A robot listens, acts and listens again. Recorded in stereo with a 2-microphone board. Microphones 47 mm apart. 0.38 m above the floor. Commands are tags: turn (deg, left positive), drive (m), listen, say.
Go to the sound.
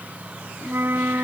<turn deg="-60"/>
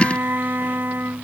<turn deg="-55"/>
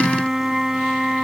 <turn deg="-10"/>
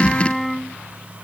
<drive m="1.0"/>
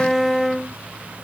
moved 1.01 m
<drive m="1.0"/>
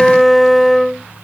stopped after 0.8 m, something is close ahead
<say>Arrived at the flute, straight ahead.</say>